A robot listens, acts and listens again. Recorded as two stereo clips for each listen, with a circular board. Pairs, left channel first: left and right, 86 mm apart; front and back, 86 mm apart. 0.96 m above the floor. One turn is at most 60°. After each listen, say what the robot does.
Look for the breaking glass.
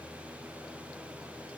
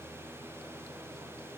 Keep listening.
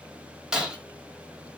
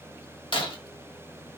Turn 10° right.
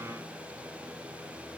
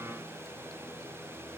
Facing where the breaking glass came from. I can't hear it now.